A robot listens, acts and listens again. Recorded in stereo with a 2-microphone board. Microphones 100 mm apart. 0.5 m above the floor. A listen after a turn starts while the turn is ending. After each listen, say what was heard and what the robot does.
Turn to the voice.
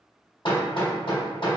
Keep listening.
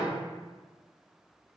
Keep listening.
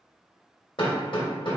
I can't make out anyone speaking, only hammering.